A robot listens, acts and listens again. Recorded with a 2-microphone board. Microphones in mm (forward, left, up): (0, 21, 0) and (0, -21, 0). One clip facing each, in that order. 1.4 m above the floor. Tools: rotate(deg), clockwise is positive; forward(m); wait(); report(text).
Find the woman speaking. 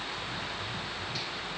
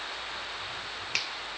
wait()
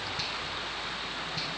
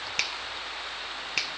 wait()
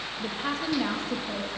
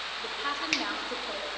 rotate(30)
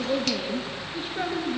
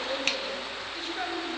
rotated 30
rotate(-30)
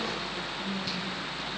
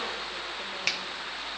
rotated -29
wait()
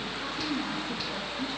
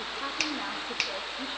rotate(30)
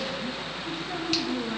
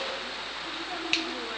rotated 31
report("Found it: a woman speaking, straight ahead.")